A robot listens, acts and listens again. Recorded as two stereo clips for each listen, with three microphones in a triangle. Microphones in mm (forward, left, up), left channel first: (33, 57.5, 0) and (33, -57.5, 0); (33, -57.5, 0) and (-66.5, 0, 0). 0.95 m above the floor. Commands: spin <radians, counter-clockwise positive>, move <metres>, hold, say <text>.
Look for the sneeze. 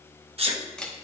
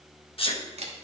spin -1.13
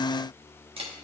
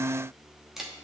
say I heard a sneeze from this way, but can't make it out now.